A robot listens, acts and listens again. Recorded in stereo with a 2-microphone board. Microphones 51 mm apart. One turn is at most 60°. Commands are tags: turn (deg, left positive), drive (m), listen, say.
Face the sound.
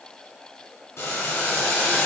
<turn deg="60"/>
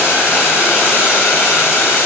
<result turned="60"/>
<turn deg="45"/>
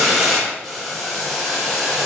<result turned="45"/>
<turn deg="-10"/>
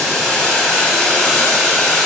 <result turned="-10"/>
<say>Facing the boiling.</say>